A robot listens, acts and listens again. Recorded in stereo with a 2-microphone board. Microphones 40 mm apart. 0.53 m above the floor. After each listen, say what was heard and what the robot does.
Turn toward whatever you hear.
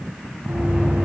The knocking: about 65° right or 115° right. Turn 65° right.
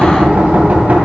So it is at 50° right. Turn 50° right.
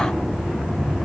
Found it: knocking, straight ahead.